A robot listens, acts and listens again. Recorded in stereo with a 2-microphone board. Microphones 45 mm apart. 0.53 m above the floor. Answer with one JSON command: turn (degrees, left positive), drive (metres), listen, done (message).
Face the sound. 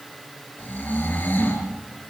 {"turn": 45}
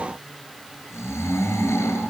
{"turn": 90}
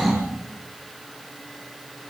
{"done": "Found it: snoring, straight ahead."}